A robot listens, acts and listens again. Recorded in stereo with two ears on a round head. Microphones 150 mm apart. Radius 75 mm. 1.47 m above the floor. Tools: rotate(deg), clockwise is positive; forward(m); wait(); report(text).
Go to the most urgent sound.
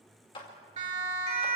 rotate(40)
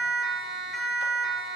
forward(1.0)
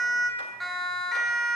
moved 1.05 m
forward(1.0)
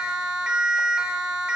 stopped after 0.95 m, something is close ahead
report("Arrived at the siren, straight ahead.")